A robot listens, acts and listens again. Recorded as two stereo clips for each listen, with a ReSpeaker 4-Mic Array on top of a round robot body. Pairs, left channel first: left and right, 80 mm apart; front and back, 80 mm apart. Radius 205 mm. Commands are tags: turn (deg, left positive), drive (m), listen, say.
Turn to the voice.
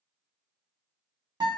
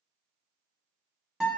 <listen/>
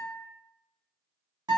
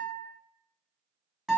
<listen/>
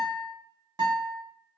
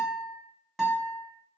<say>I can't make out anyone speaking, only a guitar.</say>